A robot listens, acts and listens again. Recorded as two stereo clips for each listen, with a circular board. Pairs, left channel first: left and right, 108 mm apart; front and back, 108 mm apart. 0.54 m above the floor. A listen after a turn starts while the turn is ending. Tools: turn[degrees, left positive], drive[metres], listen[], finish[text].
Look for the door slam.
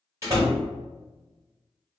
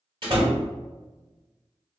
Thought: The door slam: 150° right.
Action: turn[-150]
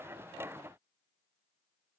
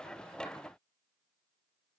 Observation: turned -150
Action: finish[I heard a door slam from this way, but can't make it out now.]